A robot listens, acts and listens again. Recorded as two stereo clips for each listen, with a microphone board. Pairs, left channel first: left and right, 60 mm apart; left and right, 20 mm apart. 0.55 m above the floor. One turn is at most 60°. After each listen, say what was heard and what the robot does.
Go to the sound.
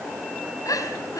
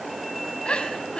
Turn 60° left.
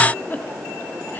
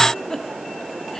So it is at 35° left. Turn 35° left.
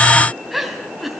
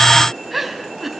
Drive 1.0 m forward.
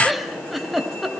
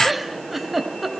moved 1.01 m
Drive 1.0 m forward.
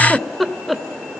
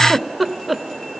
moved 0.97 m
Drive 1.0 m forward.
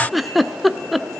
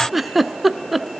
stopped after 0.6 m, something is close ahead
I am next to the giggle.